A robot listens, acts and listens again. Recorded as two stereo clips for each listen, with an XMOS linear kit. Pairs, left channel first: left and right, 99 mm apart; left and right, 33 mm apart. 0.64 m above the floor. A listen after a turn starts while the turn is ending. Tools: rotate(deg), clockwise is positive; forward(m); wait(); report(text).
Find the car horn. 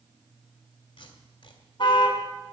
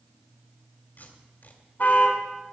rotate(-55)
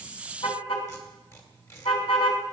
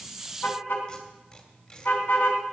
rotate(-70)
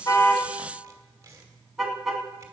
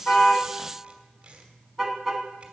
report("Found it: a car horn, straight ahead.")